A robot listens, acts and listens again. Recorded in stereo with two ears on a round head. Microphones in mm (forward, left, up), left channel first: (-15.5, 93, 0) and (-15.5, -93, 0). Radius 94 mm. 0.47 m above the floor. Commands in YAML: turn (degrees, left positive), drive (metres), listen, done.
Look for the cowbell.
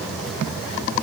listen: true
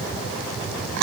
listen: true
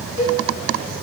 turn: -70
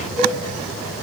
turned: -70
turn: -35
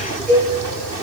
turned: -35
done: "Facing the cowbell, 2 to 4 m away."